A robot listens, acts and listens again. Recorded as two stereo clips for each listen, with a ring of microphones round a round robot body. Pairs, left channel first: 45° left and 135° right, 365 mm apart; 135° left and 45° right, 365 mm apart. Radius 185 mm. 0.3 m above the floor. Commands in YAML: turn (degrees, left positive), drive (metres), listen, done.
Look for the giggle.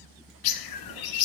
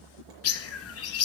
listen: true
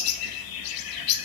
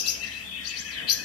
listen: true
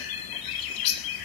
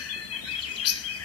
done: "I can't make out a giggle to turn to."